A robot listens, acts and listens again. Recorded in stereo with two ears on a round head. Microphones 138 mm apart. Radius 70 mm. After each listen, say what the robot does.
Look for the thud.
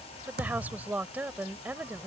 Turn 65° right.
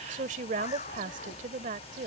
Keep listening.
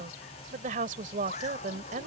I heard a thud, but can't make it out now. It was about straight ahead or 50° right.